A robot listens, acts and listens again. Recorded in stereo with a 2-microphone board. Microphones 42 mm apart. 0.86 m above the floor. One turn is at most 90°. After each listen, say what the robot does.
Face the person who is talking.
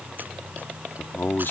Turn 60° left.
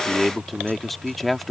Found it: a man speaking, straight ahead.